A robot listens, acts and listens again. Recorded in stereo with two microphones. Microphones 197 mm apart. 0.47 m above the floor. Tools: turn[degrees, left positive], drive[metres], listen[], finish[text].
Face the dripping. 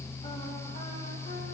Action: listen[]
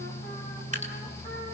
Thought: The dripping: about 35° right or 145° right.
Action: turn[-35]
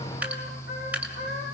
Thought: So it is at 10° right.
Action: turn[-10]
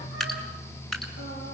Action: finish[Found it: dripping, straight ahead.]